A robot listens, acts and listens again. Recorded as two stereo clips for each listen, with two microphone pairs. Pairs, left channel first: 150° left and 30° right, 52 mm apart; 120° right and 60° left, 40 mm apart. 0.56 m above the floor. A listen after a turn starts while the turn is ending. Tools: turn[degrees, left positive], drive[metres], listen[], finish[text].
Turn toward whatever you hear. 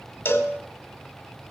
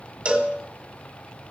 Thought: The cowbell: 110° left.
Action: turn[110]
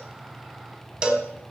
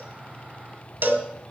Thought: The cowbell is now 35° left.
Action: turn[35]
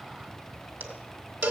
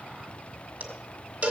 Thought: The cowbell is now 10° left.
Action: turn[10]
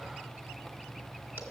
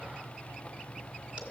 Action: listen[]
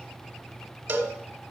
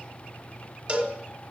Action: finish[Facing the cowbell.]